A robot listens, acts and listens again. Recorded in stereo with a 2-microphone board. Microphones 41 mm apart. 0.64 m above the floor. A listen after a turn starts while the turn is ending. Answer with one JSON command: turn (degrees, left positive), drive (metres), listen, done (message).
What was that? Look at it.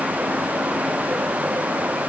{"listen": true}
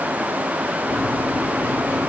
{"turn": 65}
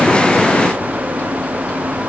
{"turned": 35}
{"turn": 50}
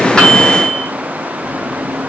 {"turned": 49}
{"done": "Facing the microwave, under 1 m away."}